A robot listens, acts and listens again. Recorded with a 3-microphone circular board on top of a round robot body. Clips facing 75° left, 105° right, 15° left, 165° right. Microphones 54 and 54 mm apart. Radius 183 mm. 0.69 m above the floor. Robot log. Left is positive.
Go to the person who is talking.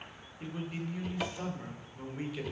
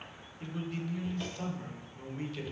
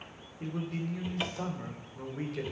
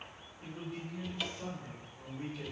cmd fwd 1.0
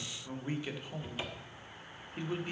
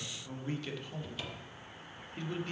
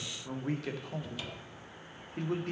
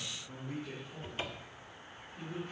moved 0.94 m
cmd fwd 1.0
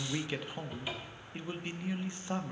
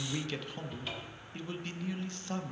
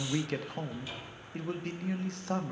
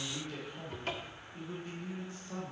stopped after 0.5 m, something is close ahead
end: I am next to the man speaking.